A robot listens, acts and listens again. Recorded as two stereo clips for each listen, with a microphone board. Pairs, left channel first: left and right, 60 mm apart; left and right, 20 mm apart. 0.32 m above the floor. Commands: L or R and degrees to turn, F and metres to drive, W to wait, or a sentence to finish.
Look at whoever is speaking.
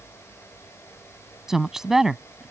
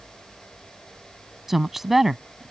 R30
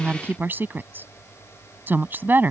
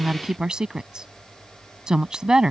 R140
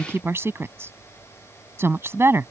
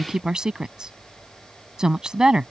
R50
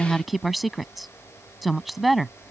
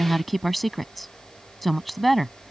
Facing the woman speaking.